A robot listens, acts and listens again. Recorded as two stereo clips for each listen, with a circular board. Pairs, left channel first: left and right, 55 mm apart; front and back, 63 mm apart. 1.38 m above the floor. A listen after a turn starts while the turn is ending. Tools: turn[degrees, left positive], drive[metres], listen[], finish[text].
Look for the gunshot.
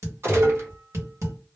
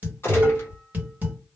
Thought: The gunshot: 50° right.
Action: turn[-50]
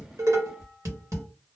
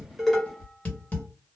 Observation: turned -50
Action: finish[Facing where the gunshot came from. I can't hear it now.]